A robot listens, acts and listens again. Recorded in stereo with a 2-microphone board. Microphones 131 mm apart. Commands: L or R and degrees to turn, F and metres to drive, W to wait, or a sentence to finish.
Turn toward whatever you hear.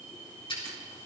L40
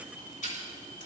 L100
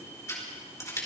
L25
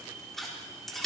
Found it: scissors, straight ahead.